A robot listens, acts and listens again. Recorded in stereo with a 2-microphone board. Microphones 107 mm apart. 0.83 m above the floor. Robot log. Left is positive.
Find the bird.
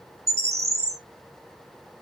cmd yaw -90
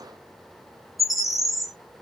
end: Facing the bird, under 1 m away.